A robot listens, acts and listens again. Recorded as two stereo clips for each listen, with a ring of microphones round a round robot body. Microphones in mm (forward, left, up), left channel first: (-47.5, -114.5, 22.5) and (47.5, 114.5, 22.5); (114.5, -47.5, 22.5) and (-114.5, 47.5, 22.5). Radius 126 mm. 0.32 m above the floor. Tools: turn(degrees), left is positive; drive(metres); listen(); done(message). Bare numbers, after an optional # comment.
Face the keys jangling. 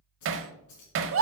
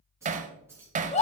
# The keys jangling: 120° right.
turn(-120)
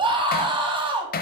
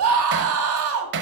listen()
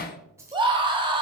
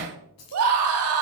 # The keys jangling is now 10° right.
turn(-10)
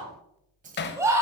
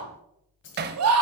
# The keys jangling is now 15° left.
turn(15)
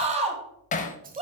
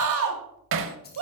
listen()
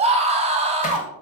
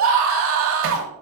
listen()
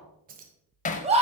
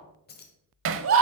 # The keys jangling is now 20° left.
turn(20)
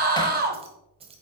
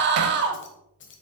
done("Facing the keys jangling.")